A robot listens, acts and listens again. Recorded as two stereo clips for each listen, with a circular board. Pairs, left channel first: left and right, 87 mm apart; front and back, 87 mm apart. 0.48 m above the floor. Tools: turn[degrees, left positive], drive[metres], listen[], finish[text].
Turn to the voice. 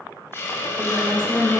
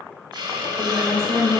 Thought: The woman speaking: 35° left.
Action: turn[35]
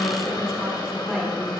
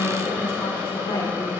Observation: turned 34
Action: finish[Found it: a woman speaking, straight ahead, 2 to 4 m away.]